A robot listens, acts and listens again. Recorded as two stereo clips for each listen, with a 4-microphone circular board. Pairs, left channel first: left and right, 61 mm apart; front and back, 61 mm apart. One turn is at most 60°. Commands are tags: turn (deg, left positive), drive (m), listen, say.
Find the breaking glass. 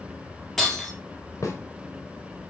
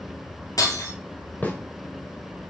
<say>Found it: breaking glass, straight ahead, 2 to 4 m away.</say>